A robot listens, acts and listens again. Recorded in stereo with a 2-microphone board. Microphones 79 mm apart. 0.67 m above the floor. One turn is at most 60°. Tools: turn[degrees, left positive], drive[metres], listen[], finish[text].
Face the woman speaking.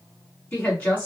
Thought: The woman speaking: about 20° left or 160° left.
Action: turn[20]
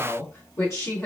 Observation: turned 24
Thought: So it is at 135° left.
Action: turn[60]
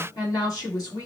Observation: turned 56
Thought: The woman speaking is now 80° left.
Action: turn[60]
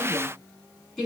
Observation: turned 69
Thought: The woman speaking is now 10° left.
Action: turn[10]
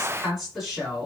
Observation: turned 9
Action: finish[Found it: a woman speaking, straight ahead.]